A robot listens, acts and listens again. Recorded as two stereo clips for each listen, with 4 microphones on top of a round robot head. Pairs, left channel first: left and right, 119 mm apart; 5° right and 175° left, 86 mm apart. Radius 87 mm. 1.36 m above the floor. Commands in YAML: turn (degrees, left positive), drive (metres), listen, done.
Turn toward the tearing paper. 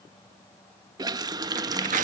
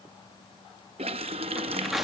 turn: -95
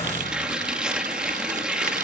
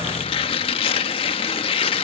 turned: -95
done: "Found it: tearing paper, straight ahead."